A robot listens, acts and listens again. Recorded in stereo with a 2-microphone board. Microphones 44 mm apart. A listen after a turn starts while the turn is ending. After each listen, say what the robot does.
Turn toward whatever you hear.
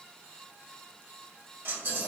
Turn 60° right.
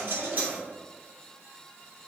Turn 45° right.
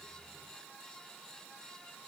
Facing where the dropped coin came from. I can't hear it now.